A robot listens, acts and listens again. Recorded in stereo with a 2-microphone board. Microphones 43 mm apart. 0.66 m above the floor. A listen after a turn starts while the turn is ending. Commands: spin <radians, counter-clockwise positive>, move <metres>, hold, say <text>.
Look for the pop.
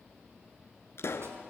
spin 1.31
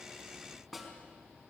hold
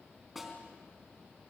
say I heard a pop, but can't make it out now. It was about straight ahead or 30° left.